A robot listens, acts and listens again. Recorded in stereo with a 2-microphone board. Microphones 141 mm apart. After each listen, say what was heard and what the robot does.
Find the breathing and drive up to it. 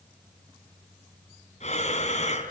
The breathing: about 55° left or 125° left. Turn 55° left.
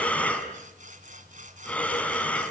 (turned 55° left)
So it is at 10° left. Turn 10° left.
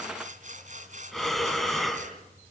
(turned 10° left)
Drive 1.0 m forward.
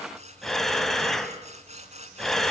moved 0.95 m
Drive 1.0 m forward.
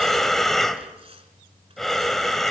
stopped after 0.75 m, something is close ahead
I am next to the breathing.